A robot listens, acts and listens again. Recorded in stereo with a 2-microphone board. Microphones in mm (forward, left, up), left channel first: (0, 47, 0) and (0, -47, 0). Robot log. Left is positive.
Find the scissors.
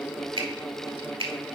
cmd idle
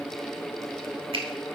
cmd idle
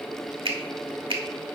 end: I can't make out scissors to turn to.